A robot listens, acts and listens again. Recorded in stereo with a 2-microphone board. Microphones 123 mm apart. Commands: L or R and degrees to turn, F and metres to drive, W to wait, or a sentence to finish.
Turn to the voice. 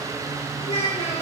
L60
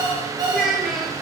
Found it: a child speaking, straight ahead, 2 to 4 m away.